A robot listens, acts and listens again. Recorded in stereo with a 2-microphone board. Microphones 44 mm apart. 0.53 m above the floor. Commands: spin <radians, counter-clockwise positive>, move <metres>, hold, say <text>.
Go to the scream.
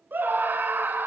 spin -0.87
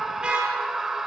spin -0.17
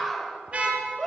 move 1.0
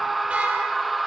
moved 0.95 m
move 1.0
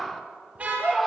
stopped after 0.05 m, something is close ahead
say Arrived at the scream, straight ahead.